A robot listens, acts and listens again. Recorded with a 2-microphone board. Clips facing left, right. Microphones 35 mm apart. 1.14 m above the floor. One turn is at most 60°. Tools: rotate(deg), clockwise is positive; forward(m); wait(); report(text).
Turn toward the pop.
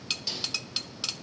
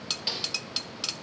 wait()
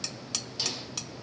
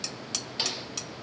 wait()
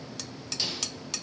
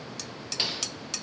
report("I can't make out a pop to turn to.")